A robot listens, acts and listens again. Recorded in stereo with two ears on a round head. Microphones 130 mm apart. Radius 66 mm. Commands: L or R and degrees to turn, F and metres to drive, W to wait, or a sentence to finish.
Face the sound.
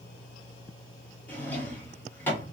L30
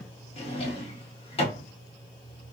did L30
L135
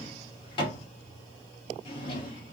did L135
L35
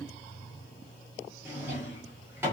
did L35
R15
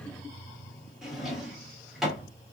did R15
Found it: a drawer, straight ahead, 1 to 2 m away.